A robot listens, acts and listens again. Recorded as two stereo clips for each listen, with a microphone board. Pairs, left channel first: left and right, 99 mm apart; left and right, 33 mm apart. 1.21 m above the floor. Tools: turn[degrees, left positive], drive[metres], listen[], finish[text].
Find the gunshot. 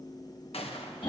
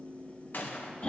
Action: turn[90]
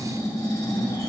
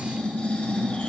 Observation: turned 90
Action: finish[I heard a gunshot from this way, but can't make it out now.]